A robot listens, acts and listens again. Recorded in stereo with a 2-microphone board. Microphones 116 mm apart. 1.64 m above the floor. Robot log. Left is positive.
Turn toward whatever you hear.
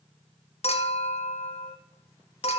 note: The clink: about 65° left or 115° left.
cmd yaw +65
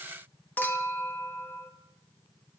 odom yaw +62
note: So it is at 20° left.
cmd yaw +20
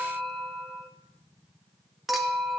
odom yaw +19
end: Found it: a clink, straight ahead.